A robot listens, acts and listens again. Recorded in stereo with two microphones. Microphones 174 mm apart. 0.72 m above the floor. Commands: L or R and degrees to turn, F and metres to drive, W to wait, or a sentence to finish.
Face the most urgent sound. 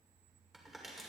W
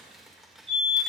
R30
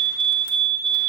R115
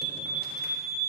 R35
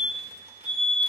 Facing the fire alarm.